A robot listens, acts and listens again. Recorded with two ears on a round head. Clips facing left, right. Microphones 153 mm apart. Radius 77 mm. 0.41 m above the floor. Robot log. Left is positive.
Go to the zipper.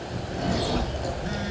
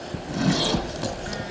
cmd yaw -90
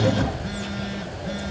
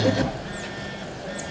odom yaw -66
note: So it is at 15° right.
cmd yaw -15
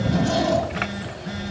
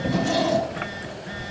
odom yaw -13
cmd fwd 1.0
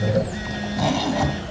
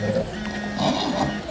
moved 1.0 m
cmd fwd 1.0
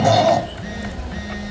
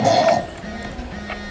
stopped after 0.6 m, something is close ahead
end: I am next to the zipper.